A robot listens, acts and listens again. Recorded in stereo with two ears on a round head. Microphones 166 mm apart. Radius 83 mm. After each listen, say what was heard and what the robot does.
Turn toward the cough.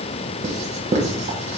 Keep listening.
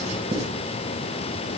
Keep listening.
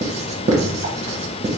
I can't make out a cough to turn to.